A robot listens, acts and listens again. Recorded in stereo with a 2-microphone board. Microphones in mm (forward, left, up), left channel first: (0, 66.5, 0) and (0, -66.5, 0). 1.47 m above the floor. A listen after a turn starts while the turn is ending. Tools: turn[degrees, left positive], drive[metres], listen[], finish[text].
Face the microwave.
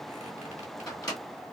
Thought: The microwave: about 25° left or 155° left.
Action: turn[25]
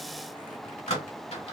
Thought: So it is at 125° left.
Action: turn[125]
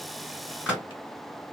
Thought: The microwave is now 10° right.
Action: turn[-10]
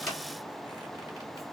Action: listen[]
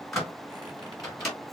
Action: finish[Facing the microwave.]